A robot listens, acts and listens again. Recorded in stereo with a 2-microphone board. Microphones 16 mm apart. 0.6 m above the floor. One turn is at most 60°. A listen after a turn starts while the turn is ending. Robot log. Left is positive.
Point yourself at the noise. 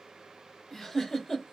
note: The giggle: about 25° left or 155° left.
cmd yaw +25
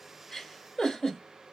note: So it is at 120° left.
cmd yaw +60
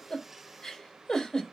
note: The giggle is now 60° left.
cmd yaw +60
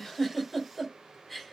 end: Facing the giggle, 1 to 2 m away.